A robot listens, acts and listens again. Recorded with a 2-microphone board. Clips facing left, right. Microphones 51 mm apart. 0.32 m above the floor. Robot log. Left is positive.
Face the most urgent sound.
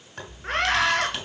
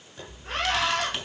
note: The scream: about 55° left or 125° left.
cmd yaw +55
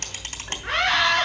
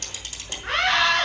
end: Found it: a scream, straight ahead, over 4 m away.